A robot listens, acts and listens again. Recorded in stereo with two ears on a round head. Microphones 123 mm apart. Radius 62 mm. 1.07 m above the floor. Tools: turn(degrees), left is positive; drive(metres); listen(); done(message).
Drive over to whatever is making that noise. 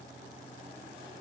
listen()
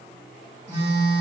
turn(degrees=-35)
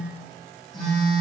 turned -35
drive(metres=1.0)
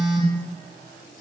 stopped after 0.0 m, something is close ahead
done("Blocked. The phone buzzing is further on, straight ahead.")